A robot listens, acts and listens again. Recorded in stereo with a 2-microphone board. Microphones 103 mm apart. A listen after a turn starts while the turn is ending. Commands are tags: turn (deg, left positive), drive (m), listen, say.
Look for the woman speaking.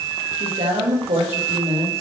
<turn deg="-90"/>
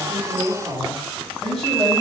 <say>Found it: a woman speaking, straight ahead.</say>